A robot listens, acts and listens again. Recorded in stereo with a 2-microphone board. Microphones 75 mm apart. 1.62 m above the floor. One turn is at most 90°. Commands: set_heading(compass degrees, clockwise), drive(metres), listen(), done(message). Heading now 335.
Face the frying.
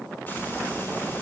set_heading(305)
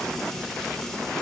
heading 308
done("Found it: frying, straight ahead, 2 to 4 m away.")